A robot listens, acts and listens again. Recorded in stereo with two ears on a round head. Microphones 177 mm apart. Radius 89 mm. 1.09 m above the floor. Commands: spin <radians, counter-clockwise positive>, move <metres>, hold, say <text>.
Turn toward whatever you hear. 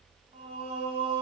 spin -0.52
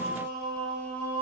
spin 0.17
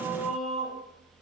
say Facing the singing, 2 to 4 m away.